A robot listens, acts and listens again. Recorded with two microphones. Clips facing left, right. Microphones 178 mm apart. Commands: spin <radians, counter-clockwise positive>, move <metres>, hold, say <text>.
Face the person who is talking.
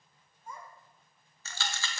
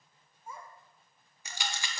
spin -0.52
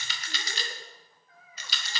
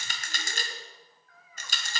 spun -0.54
spin 0.44
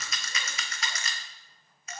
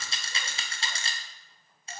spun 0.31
hold
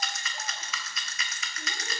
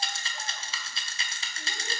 hold
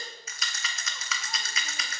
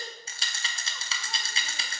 say I heard a child speaking from this way, but can't make it out now.